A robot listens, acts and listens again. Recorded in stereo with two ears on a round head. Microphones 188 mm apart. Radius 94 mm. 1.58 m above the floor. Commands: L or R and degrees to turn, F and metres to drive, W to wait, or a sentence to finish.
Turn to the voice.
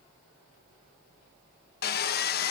W
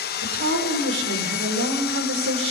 R70
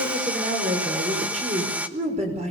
R30
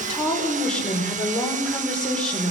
Facing the woman speaking.